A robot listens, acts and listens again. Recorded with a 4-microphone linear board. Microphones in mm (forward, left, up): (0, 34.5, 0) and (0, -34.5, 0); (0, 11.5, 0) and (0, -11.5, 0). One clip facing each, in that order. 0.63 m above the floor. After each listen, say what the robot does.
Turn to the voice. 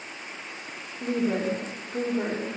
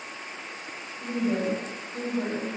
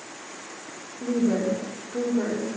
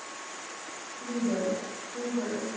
Turn 55° left.
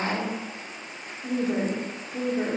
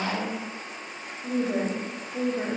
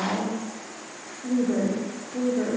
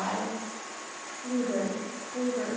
Turn 20° left.
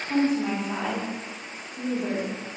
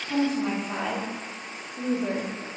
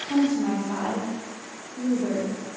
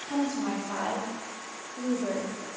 Found it: a woman speaking, straight ahead, 1 to 2 m away.